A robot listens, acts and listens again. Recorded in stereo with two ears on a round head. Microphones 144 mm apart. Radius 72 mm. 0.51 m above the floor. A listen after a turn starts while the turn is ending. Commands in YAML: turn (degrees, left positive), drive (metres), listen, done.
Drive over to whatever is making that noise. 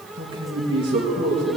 turn: -30
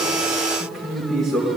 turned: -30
drive: 1.0
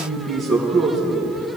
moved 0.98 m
drive: 1.0
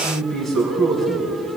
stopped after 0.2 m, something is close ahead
done: "Blocked. The man speaking is further on, straight ahead."